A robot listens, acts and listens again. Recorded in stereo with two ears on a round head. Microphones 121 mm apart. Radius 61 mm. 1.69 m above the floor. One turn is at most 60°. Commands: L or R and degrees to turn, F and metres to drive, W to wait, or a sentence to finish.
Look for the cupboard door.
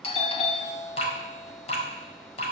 W
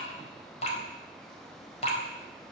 W
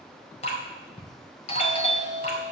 I can't make out a cupboard door to turn to.